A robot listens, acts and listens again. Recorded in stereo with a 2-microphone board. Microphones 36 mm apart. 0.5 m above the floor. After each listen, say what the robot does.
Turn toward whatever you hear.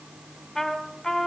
Turn 30° left.
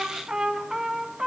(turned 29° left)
Turn 20° right.
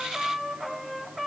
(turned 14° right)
Turn 10° right.
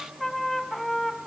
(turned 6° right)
Facing the trumpet.